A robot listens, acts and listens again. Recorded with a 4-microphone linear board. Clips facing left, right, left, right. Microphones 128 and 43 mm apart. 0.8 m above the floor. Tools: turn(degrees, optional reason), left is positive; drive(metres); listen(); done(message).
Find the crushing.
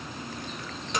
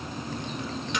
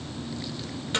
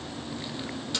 listen()
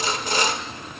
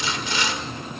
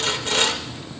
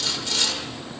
listen()
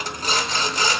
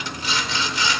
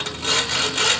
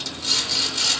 done("I can't make out crushing to turn to.")